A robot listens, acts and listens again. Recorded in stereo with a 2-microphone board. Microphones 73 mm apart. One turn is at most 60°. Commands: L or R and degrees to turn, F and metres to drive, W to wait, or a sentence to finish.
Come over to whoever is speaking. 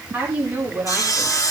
R20
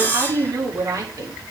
R60
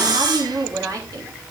R50
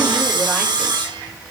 W
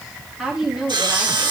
F1.0
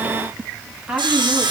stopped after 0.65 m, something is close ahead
R10
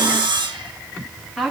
Blocked. The woman speaking is further on, straight ahead.